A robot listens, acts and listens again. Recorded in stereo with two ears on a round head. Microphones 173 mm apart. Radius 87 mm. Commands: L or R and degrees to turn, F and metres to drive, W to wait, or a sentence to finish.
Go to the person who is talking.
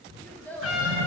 L30
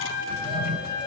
W
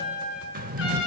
W
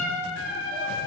I heard a child speaking, but can't make it out now. It was about 20° right or 140° left. I did not reach it.